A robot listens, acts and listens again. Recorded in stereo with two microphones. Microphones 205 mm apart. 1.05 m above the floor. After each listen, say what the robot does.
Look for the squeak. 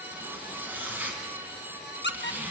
Turn 60° left.
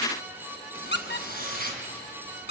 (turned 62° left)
Turn 55° left.
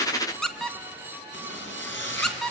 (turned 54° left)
Facing the squeak.